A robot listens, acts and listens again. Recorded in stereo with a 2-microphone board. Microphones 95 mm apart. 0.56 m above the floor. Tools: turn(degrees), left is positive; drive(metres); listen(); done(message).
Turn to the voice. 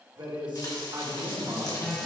turn(degrees=-55)
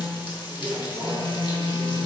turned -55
turn(degrees=-15)
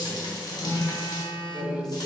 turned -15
done("Facing the man speaking, 1 to 2 m away.")